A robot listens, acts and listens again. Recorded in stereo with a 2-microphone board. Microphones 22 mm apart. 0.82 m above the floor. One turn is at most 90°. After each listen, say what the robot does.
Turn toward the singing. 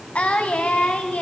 Turn 90° left.
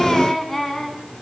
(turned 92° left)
Turn 15° left.
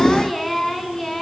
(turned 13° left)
Turn 10° left.
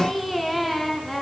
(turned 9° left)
Turn 10° left.
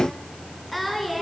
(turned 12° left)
Facing the singing, over 4 m away.